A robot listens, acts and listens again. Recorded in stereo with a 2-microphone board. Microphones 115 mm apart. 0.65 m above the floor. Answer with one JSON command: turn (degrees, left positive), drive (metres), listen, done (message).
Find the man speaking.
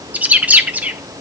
{"listen": true}
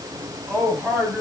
{"turn": -30}
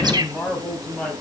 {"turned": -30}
{"turn": 10}
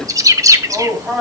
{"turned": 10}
{"turn": -10}
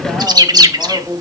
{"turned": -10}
{"done": "Facing the man speaking, 2 to 4 m away."}